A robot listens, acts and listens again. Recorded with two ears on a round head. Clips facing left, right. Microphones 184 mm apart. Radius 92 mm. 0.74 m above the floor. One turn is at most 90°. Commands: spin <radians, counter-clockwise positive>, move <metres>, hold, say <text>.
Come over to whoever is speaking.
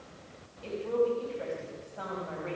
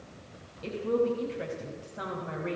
spin -0.44
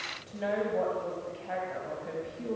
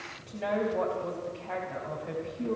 move 1.0
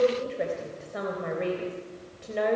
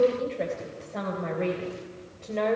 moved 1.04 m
spin 0.17
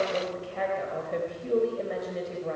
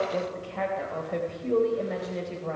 move 1.0
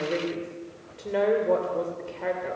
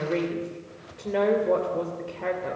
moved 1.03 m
move 1.0
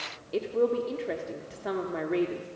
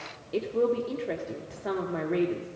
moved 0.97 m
move 1.0
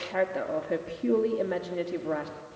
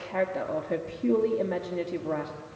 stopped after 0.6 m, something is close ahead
say Arrived at the woman speaking, straight ahead.